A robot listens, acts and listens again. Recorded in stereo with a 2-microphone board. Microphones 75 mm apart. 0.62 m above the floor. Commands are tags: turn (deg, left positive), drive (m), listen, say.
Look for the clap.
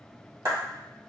<turn deg="-55"/>
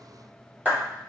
<turn deg="-25"/>
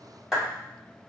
<turn deg="-10"/>
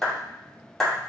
<say>Found it: a clap, straight ahead.</say>